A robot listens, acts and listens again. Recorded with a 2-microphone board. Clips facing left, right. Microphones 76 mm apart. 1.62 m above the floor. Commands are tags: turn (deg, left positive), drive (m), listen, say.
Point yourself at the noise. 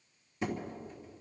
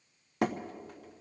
<turn deg="-70"/>
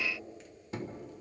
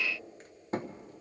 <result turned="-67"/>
<turn deg="-40"/>
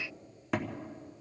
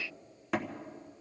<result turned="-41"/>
<say>Found it: hammering, straight ahead, 1 to 2 m away.</say>